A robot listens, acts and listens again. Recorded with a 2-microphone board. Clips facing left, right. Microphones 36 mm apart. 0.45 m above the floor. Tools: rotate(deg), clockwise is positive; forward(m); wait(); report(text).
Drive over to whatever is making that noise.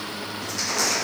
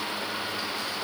rotate(-90)
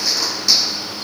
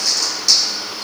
rotate(-10)
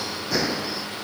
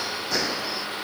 forward(1.0)
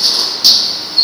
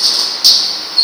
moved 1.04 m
forward(1.0)
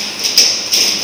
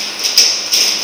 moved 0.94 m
forward(1.0)
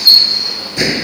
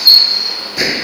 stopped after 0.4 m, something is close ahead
report("I am next to the crushing.")